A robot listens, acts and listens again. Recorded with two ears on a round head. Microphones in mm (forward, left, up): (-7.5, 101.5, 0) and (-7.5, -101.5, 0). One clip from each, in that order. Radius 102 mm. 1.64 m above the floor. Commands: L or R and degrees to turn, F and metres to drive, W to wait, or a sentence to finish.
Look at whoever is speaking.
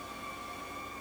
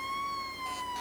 W
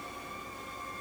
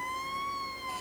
W
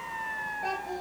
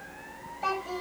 R70
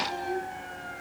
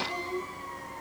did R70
R15
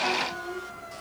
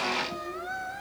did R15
W
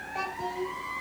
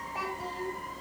Facing the child speaking, 2 to 4 m away.